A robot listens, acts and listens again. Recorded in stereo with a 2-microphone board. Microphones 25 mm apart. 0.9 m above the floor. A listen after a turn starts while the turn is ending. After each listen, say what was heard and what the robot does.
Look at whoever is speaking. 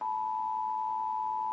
Keep listening.
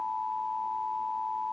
Keep listening.
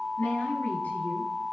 Turn 90° left.
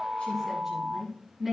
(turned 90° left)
Facing the woman speaking, over 4 m away.